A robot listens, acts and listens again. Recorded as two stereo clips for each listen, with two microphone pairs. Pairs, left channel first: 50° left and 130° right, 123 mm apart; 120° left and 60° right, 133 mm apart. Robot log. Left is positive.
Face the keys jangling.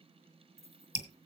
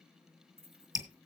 note: The keys jangling: 105° right.
cmd yaw -105
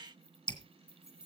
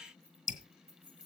note: The keys jangling is now 20° right.
cmd yaw -20
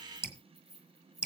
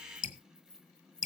note: The keys jangling is now 10° right.
cmd yaw -10
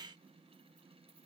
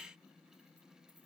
cmd idle
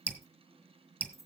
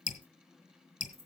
note: The keys jangling is now 15° right.
cmd yaw -15
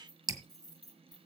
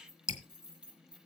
note: The keys jangling is now 10° right.
cmd yaw -10
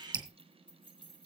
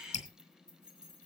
end: Facing the keys jangling, 2 to 4 m away.